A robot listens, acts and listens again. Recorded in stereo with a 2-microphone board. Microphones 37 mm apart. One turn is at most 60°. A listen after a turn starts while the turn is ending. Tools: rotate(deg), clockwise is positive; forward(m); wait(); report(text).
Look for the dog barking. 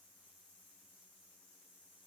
wait()
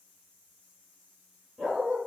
rotate(30)
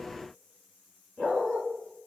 rotate(-20)
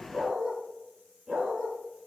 report("Found it: a dog barking, straight ahead, 2 to 4 m away.")